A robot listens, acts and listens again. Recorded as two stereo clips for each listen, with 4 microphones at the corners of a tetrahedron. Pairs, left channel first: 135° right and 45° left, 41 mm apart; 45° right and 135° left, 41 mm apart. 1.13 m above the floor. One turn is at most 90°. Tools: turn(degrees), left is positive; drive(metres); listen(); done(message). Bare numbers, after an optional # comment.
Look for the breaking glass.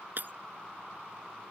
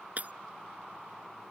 # The breaking glass: 85° left.
turn(85)
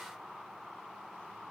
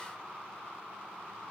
done("I heard breaking glass from this way, but can't make it out now.")